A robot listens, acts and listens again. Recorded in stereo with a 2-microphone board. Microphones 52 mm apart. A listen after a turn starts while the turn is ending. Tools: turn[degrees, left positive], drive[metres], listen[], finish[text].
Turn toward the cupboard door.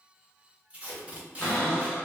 Thought: The cupboard door: about 45° left or 135° left.
Action: turn[45]
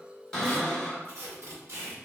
Thought: So it is at 10° left.
Action: turn[10]
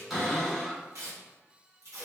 Action: finish[Facing the cupboard door.]